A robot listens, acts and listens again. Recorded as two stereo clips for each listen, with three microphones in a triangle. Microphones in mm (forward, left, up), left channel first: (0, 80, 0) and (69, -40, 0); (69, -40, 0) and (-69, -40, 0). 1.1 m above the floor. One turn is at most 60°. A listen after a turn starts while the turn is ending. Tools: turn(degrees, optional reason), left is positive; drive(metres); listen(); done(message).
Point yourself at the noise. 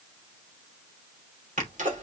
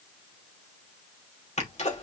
turn(degrees=-35, reason="The sneeze: 35° right.")
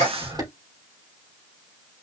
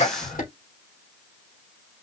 done("Found it: a sneeze, straight ahead, 2 to 4 m away.")